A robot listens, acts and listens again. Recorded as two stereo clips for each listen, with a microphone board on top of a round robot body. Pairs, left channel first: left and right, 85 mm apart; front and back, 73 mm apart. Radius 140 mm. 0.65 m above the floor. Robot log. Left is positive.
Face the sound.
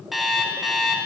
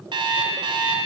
note: The alarm clock: straight behind.
cmd yaw +180
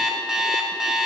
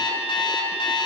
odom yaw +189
end: Found it: an alarm clock, straight ahead.